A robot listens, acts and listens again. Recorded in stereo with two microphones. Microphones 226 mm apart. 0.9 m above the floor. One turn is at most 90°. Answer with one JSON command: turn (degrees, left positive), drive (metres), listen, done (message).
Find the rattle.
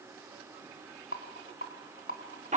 {"turn": 65}
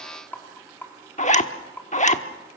{"turn": 10}
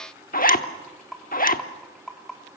{"done": "Facing the rattle, 2 to 4 m away."}